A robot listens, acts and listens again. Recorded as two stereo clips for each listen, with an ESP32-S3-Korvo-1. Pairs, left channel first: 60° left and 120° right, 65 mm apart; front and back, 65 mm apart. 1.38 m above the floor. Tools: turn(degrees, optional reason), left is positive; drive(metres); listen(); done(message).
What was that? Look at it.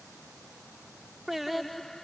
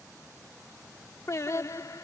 turn(degrees=-20, reason="The singing: 20° right.")
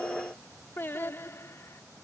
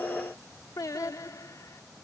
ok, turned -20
turn(degrees=20, reason="The singing is now 20° left.")
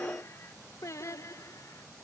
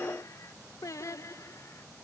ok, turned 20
turn(degrees=30, reason="The singing is now 30° left.")
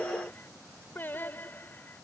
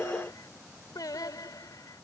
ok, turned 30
done("Facing the singing.")